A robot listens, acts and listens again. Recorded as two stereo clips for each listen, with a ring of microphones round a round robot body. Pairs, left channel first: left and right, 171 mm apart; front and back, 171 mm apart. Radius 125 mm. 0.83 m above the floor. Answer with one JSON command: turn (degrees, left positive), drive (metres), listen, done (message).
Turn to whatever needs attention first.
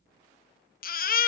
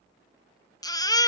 {"turn": 65}
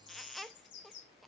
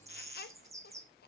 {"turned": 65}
{"listen": true}
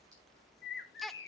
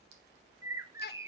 {"done": "Facing the baby crying, under 1 m away."}